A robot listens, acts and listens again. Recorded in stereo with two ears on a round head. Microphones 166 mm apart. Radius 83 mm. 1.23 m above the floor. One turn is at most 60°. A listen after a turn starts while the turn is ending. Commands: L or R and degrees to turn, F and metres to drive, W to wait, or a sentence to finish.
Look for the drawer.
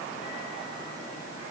W
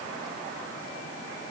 W
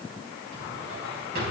R55
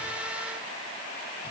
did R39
W
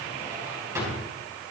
R15
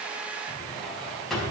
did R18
Found it: a drawer, straight ahead, over 4 m away.